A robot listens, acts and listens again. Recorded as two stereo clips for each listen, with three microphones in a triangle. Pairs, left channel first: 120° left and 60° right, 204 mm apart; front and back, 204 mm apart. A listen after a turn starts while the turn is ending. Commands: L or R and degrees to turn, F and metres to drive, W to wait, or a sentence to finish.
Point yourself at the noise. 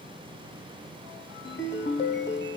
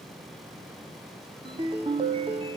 L120
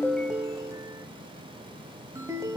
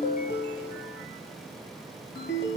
L15
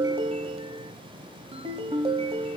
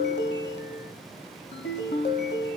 Found it: a ringtone, straight ahead.